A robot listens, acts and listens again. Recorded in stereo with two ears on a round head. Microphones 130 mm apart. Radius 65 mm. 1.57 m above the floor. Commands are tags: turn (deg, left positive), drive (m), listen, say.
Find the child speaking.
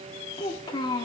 <turn deg="25"/>
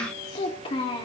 <turn deg="35"/>
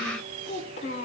<turn deg="125"/>
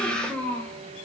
<turn deg="10"/>
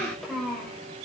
<say>Found it: a child speaking, straight ahead.</say>